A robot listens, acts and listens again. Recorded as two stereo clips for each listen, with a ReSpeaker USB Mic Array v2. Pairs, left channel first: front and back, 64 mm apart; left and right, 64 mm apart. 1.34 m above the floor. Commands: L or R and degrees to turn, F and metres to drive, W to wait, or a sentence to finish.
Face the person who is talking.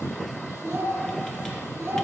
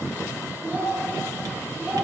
R140
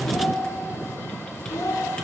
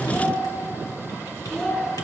L15
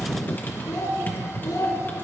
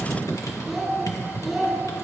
Facing the child speaking.